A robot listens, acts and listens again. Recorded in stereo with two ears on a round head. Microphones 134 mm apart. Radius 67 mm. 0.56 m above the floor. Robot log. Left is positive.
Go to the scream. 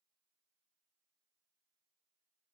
cmd idle
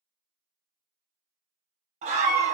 note: The scream: about 50° right or 130° right.
cmd yaw -50
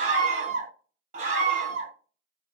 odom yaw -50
note: So it is at 65° right.
cmd yaw -65
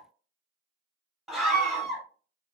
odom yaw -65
cmd fwd 1.0
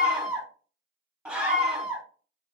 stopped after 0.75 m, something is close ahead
note: The scream is now 10° right.
cmd yaw -10
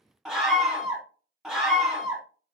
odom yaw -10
end: I am next to the scream.